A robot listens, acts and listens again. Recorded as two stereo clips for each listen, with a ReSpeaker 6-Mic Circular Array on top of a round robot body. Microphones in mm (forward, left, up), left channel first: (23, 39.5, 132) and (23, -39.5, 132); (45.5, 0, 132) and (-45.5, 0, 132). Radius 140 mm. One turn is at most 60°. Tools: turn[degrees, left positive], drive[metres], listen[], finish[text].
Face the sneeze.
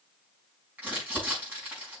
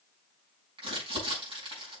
Action: listen[]
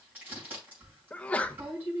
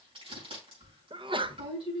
Thought: The sneeze: 165° left.
Action: turn[60]
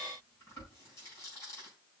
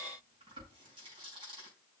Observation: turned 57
Thought: Nothing new. It was at 105° left.
Action: turn[60]
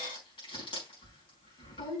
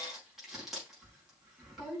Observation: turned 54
Thought: Nothing new. It was at 50° left.
Action: turn[50]
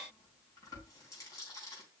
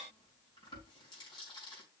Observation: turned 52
Action: finish[I heard a sneeze from this way, but can't make it out now.]